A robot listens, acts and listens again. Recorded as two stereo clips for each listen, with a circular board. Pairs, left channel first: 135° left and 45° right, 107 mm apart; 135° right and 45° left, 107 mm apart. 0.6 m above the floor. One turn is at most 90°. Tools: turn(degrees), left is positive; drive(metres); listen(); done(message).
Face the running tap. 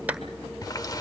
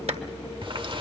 turn(degrees=80)
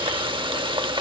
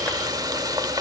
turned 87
done("Found it: a running tap, straight ahead.")